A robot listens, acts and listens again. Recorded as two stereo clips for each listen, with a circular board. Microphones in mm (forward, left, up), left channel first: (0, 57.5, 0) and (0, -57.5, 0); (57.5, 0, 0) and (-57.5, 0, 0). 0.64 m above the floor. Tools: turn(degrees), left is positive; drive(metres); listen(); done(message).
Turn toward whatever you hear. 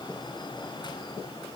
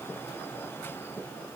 listen()
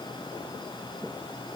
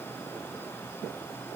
listen()
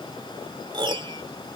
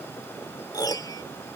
turn(degrees=-50)
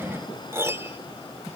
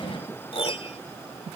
turn(degrees=-25)
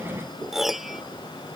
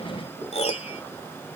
done("Found it: a piano, straight ahead.")